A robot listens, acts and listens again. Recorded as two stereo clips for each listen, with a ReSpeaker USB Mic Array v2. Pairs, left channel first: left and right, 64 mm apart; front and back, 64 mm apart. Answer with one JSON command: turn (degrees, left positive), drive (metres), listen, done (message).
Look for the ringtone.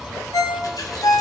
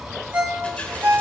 {"turn": 115}
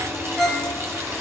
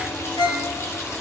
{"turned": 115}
{"done": "Found it: a ringtone, straight ahead, 2 to 4 m away."}